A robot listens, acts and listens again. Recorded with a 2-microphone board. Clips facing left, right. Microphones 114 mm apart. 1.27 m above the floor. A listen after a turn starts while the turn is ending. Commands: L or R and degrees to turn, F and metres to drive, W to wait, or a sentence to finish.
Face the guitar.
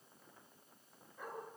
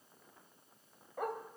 W
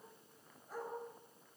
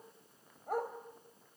W
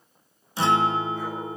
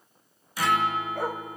L25
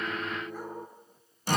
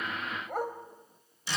L125
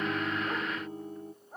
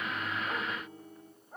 L45
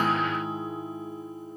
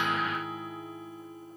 L30
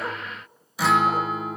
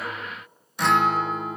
Facing the guitar.